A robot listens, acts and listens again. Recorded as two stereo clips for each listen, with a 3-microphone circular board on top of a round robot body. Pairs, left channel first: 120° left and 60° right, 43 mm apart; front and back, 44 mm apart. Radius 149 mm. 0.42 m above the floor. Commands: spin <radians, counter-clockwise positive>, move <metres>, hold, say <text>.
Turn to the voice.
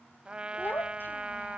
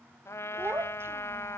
spin 2.79
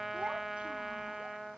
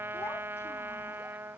hold
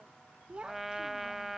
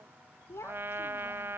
say Found it: a child speaking, straight ahead.